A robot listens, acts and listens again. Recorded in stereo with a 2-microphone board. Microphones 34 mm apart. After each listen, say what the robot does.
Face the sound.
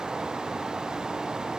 Keep listening.
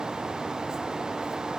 Keep listening.
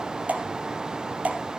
Turn 50° right.
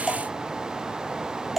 Found it: dripping, straight ahead, 1 to 2 m away.